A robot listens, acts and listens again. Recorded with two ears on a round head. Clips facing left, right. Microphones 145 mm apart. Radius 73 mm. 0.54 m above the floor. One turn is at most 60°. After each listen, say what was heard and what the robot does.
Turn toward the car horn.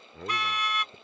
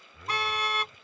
The car horn: about 30° right or 150° right. Turn 30° right.
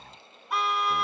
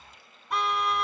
Facing the car horn.